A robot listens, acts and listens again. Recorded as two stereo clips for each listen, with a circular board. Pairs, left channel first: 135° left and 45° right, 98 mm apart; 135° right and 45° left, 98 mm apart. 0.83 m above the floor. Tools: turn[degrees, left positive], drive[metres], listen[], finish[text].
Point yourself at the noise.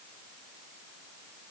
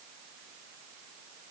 Action: listen[]
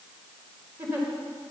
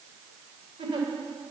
Thought: The giggle: 20° left.
Action: turn[20]
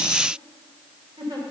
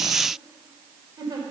Action: finish[Found it: a giggle, straight ahead.]